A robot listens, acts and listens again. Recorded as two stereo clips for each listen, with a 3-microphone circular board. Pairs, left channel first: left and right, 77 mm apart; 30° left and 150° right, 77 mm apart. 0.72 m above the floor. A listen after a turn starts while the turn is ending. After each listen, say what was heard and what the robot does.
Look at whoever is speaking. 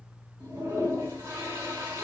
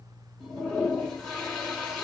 Keep listening.
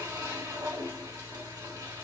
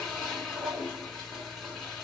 Keep listening.
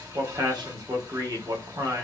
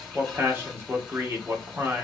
The man speaking: 95° right. Turn 95° right.
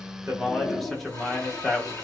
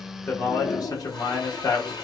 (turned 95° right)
Facing the man speaking, under 1 m away.